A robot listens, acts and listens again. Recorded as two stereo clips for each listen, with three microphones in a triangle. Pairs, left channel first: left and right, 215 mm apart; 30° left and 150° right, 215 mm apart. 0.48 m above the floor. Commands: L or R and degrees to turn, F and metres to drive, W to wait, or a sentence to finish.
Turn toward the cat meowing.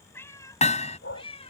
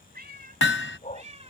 L150
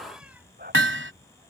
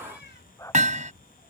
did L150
W
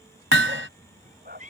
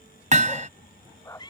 R40
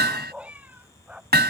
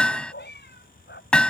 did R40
R10
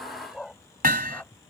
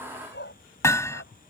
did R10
W
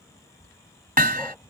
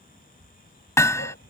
W
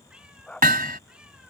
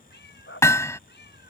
Found it: a cat meowing, straight ahead.